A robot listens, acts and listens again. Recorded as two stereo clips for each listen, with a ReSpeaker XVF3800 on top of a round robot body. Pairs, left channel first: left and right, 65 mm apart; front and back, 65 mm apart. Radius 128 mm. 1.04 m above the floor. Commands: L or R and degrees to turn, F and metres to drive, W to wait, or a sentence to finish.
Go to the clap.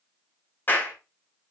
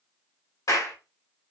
L30
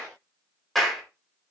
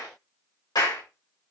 F1.0
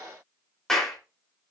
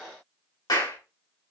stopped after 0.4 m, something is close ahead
L10
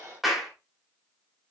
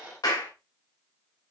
Blocked. The clap is further on, straight ahead.